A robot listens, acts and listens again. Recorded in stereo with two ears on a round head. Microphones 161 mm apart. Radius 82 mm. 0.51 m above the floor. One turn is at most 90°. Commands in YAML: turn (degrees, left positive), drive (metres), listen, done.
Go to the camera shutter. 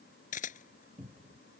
turn: 45
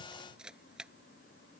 drive: 1.0
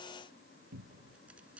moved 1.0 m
listen: true
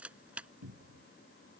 drive: 1.0
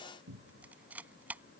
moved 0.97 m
turn: -10
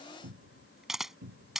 drive: 1.0
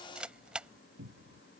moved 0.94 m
drive: 1.0
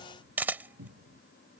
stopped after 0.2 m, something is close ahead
turn: -10
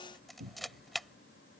done: "Arrived at the camera shutter, straight ahead."